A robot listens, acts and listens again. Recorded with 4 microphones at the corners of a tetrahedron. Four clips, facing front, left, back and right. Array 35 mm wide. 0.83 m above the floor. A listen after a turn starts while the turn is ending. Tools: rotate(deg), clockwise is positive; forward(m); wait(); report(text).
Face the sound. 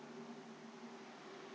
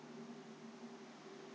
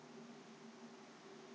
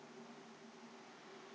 wait()
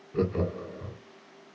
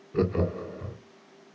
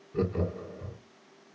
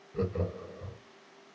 rotate(-60)
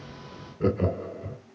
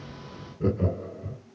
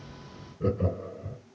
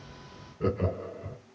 rotate(30)
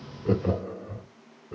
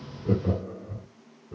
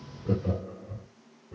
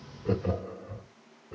rotate(25)
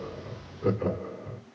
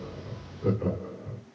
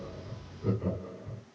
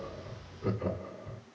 report("Found it: laughter, straight ahead, 1 to 2 m away.")